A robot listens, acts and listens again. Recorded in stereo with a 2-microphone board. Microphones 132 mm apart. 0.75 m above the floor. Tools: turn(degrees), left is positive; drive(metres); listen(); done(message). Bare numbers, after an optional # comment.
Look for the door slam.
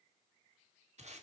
listen()
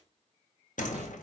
turn(90)
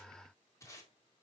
done("I heard a door slam from this way, but can't make it out now.")